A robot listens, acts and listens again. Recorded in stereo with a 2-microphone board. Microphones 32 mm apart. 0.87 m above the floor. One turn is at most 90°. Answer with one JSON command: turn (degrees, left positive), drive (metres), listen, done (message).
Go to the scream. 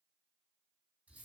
{"listen": true}
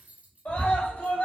{"turn": 65}
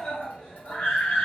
{"turn": 40}
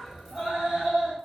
{"turn": -20}
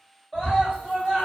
{"drive": 1.0}
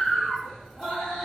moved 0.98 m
{"drive": 1.0}
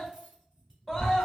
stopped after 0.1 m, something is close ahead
{"done": "Arrived at the scream, straight ahead."}